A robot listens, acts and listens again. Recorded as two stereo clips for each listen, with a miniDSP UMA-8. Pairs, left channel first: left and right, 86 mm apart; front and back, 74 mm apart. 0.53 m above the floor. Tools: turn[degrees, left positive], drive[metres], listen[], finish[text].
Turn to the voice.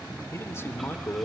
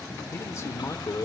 Thought: The man speaking: 35° left.
Action: turn[35]
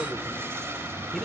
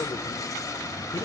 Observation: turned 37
Action: listen[]
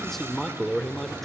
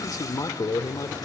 Action: finish[Facing the man speaking, 1 to 2 m away.]